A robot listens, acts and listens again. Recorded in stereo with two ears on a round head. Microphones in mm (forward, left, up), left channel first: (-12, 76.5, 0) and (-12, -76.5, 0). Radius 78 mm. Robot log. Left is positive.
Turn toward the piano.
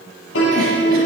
cmd yaw +90
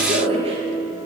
note: So it is at 10° right.
cmd yaw -10
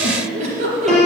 end: Found it: a piano, straight ahead.